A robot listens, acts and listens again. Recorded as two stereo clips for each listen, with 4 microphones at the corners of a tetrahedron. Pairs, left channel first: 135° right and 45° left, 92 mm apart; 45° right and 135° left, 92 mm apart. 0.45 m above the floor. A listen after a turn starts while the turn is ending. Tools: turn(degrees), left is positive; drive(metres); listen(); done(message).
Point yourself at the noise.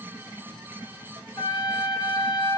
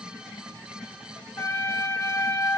turn(degrees=-105)
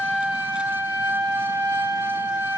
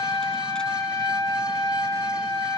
turn(degrees=-20)
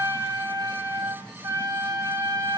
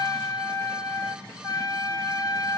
done("Found it: a trumpet, straight ahead.")